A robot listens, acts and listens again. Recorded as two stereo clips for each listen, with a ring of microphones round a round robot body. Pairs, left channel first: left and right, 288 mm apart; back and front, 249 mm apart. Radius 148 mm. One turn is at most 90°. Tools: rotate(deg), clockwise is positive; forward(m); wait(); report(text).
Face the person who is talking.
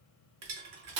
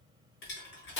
wait()
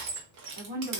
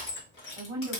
rotate(75)
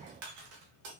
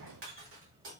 wait()
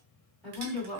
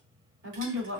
report("Facing the woman speaking, 1 to 2 m away.")